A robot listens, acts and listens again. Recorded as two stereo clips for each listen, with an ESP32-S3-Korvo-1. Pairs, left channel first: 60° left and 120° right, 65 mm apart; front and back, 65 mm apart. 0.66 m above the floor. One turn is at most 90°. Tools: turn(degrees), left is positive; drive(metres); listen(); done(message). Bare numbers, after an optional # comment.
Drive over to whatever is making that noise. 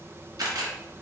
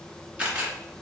# The camera shutter: 110° right.
turn(-90)
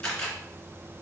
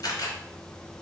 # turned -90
# The camera shutter is now 20° right.
turn(-20)
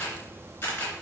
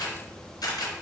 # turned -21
drive(1.0)
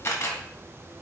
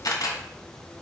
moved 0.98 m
# The camera shutter is now 10° left.
turn(10)
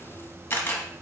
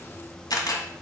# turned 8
drive(1.0)
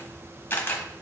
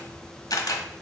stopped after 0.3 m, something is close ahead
done("I am next to the camera shutter.")